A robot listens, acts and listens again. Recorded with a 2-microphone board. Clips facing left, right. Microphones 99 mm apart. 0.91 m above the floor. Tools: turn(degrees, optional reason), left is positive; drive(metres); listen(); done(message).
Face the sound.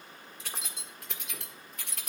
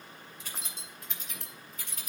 turn(degrees=70, reason="The keys jangling: about 70° left or 110° left.")
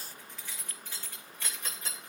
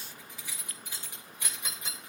turn(degrees=-20, reason="So it is at 20° right.")
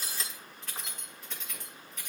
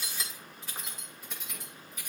turn(degrees=-10, reason="The keys jangling is now 10° right.")
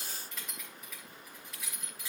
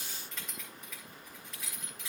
done("Facing the keys jangling, 2 to 4 m away.")